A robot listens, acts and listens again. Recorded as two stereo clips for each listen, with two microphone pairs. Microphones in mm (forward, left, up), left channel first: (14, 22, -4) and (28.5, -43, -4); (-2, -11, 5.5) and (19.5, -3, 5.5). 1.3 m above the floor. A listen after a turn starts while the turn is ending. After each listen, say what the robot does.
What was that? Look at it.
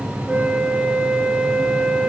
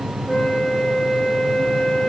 Turn 155° right.
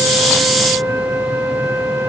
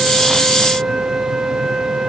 Turn 35° right.
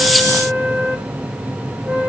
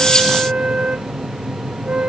Found it: a flute, straight ahead, under 1 m away.